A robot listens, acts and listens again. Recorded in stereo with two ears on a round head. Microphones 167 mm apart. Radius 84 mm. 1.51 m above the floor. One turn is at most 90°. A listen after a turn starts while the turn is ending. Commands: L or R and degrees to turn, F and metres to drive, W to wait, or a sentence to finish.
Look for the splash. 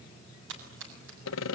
R75
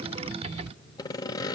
W
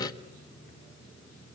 I heard a splash, but can't make it out now. It was about straight ahead or 30° right.